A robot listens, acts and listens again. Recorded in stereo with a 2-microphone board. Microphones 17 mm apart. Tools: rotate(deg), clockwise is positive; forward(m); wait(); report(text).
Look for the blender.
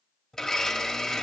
rotate(-25)
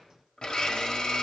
rotate(-125)
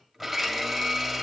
report("Found it: a blender, straight ahead, 1 to 2 m away.")